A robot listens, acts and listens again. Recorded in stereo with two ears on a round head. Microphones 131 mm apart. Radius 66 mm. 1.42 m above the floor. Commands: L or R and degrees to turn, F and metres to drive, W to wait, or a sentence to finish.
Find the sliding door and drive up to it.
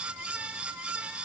W
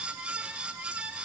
W
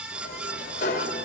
L55
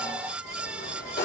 L65
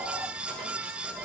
W
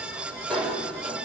F1.0
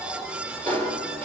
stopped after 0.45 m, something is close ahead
L10
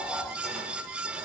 W
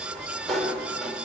Blocked. The sliding door is further on, straight ahead.